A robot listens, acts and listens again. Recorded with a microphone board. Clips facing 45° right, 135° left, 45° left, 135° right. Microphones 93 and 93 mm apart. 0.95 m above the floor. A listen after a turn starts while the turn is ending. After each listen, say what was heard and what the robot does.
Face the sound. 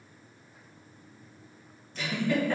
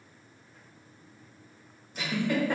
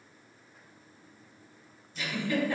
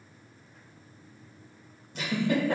The giggle: 150° right. Turn 150° right.
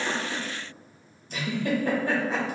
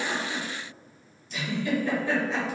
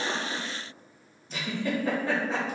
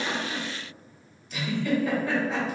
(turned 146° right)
The giggle is now 10° right. Turn 10° right.
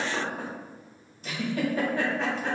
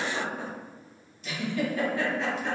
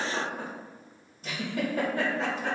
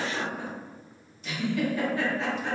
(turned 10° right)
Found it: a giggle, straight ahead.